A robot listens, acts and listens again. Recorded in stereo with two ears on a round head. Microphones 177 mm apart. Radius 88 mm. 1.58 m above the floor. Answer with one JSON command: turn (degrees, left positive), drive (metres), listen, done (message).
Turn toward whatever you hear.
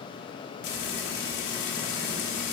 {"turn": 60}
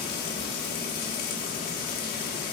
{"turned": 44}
{"turn": 55}
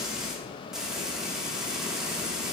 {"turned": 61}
{"done": "Facing the frying, 1 to 2 m away."}